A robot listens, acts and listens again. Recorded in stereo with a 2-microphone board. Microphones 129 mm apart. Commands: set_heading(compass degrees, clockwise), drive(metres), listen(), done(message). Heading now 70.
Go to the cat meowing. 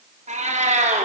set_heading(135)
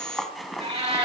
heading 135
set_heading(185)
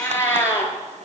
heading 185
set_heading(165)
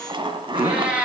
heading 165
set_heading(175)
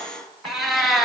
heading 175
drive(1.0)
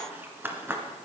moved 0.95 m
listen()
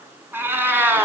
set_heading(190)
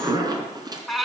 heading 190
drive(1.0)
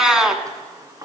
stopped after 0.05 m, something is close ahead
done("I am next to the cat meowing.")